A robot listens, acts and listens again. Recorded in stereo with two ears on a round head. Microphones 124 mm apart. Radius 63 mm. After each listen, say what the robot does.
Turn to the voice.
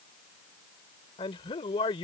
Turn 35° left.
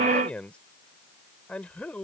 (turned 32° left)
Turn 10° left.
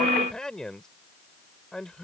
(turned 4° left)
Facing the man speaking.